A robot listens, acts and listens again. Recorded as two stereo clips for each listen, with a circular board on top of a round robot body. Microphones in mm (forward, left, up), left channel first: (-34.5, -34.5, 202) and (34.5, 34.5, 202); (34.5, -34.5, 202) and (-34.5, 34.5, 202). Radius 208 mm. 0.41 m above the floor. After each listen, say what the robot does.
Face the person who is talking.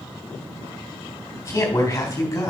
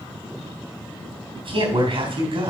Turn 165° left.
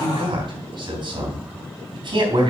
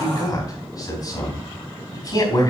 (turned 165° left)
Found it: a man speaking, straight ahead.